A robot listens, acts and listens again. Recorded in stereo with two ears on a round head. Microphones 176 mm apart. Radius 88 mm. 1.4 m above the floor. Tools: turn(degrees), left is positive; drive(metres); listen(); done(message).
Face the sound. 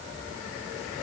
listen()
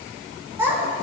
turn(degrees=-30)
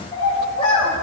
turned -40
turn(degrees=30)
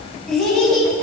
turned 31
done("Facing the child speaking.")